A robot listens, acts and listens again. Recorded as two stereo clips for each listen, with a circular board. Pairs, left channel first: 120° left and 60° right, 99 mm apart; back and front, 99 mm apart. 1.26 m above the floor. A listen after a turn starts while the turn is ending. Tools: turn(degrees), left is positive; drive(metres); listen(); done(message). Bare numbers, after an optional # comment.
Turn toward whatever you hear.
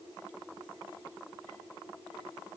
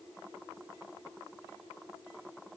listen()
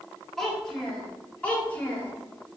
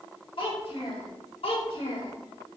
# The child speaking: 170° right.
turn(-170)
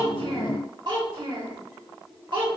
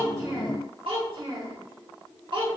# The child speaking is now 25° right.
turn(-25)
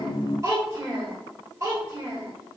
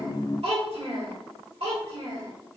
done("Facing the child speaking.")